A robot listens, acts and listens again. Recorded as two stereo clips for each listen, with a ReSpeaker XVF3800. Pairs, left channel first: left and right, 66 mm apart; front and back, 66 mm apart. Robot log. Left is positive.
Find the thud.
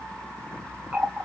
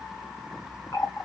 cmd idle
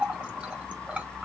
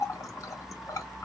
cmd idle
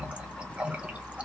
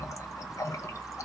end: I can't make out a thud, only a running tap.